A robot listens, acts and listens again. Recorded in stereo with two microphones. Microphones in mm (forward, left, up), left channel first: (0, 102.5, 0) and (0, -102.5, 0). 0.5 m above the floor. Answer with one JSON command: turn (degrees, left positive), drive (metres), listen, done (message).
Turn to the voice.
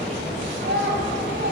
{"turn": -70}
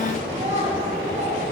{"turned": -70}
{"turn": -35}
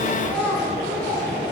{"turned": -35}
{"turn": 10}
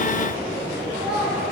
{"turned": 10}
{"done": "Found it: a child speaking, straight ahead, 2 to 4 m away."}